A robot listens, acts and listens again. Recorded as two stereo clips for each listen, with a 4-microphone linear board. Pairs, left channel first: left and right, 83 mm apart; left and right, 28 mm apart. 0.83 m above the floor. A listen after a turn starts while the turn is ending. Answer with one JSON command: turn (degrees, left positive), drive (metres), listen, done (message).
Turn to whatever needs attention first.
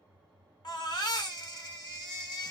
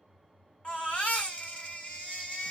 {"turn": 60}
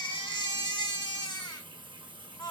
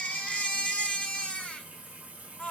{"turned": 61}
{"turn": 60}
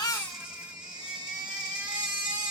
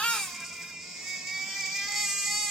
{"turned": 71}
{"turn": -10}
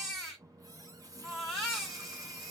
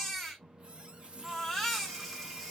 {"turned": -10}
{"done": "Facing the baby crying, 1 to 2 m away."}